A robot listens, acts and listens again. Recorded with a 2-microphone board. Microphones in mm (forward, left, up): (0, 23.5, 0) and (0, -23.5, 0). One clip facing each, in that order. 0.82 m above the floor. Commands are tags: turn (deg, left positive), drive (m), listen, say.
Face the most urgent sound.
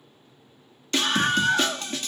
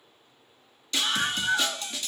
<turn deg="45"/>
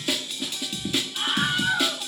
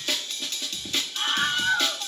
<turn deg="10"/>
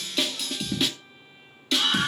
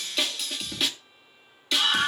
<say>Found it: a scream, straight ahead, 1 to 2 m away.</say>